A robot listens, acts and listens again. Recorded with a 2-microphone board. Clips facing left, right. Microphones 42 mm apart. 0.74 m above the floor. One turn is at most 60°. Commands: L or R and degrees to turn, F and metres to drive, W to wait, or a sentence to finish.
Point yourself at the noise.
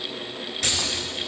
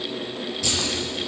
L60
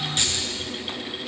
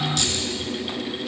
L35
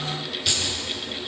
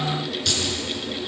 L10
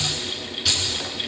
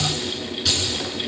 Facing the keys jangling.